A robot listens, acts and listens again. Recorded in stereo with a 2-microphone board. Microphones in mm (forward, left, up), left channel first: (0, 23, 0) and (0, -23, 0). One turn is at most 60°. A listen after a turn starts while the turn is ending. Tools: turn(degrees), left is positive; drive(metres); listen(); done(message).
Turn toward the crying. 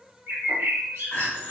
turn(degrees=30)
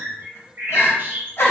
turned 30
turn(degrees=60)
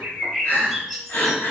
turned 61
turn(degrees=55)
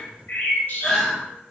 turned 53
done("Facing the crying, 1 to 2 m away.")